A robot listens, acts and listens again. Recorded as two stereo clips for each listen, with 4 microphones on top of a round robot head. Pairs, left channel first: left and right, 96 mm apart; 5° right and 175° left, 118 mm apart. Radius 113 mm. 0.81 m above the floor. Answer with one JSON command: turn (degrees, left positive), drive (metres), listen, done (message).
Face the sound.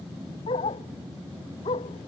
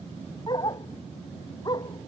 {"turn": 50}
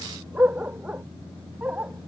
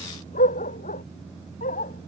{"turn": -10}
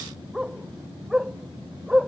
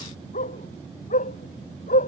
{"done": "Found it: a dog barking, straight ahead."}